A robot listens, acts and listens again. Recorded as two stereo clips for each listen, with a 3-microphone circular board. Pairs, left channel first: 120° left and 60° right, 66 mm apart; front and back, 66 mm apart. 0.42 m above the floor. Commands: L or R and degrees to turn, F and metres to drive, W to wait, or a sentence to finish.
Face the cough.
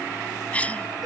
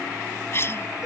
L50
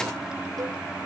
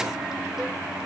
W
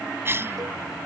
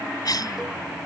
R10
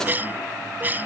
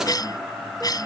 Found it: a cough, straight ahead.